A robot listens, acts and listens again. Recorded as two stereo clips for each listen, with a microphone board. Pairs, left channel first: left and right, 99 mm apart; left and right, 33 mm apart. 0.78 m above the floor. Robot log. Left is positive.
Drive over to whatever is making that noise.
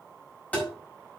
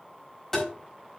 note: The tapping: about 15° left or 165° left.
cmd yaw +15
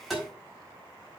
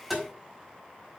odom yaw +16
cmd fwd 1.0
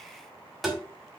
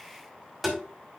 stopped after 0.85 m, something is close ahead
end: Blocked. The tapping is further on, straight ahead.